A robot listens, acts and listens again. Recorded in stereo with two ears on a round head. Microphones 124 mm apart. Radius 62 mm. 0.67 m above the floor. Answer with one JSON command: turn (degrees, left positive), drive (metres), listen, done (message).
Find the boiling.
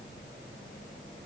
{"listen": true}
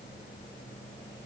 {"listen": true}
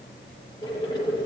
{"turn": 30}
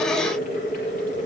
{"turn": 120}
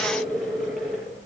{"done": "Found it: boiling, straight ahead."}